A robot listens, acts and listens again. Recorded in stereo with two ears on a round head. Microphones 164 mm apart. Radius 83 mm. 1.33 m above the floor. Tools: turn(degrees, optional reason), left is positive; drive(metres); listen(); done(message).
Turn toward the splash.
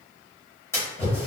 turn(degrees=30)
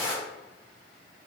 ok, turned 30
turn(degrees=135, reason="So it is at 135° left.")
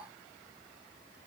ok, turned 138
done("I heard a splash from this way, but can't make it out now.")